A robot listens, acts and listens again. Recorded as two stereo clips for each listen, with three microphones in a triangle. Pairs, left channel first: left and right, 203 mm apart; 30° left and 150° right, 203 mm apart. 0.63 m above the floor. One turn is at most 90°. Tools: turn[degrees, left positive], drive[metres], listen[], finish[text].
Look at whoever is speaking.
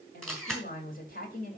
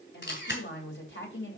Thought: The woman speaking: 50° left.
Action: turn[50]
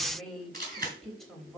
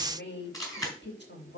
Action: finish[Facing the woman speaking, 2 to 4 m away.]